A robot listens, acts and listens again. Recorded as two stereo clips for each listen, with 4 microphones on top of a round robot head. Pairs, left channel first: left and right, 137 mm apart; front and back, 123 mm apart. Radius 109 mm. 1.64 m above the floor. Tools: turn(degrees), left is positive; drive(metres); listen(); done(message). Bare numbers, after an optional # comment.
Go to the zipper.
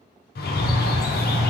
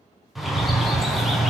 listen()
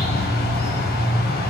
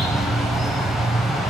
listen()
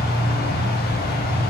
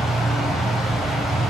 done("I can't make out a zipper to turn to.")